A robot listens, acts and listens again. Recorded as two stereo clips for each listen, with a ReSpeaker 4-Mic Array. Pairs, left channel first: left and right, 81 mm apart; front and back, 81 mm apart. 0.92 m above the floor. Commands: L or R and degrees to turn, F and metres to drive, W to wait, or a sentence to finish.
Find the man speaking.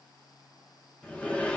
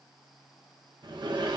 W
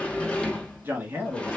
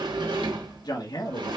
R20
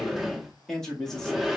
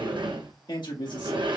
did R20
Found it: a man speaking, straight ahead.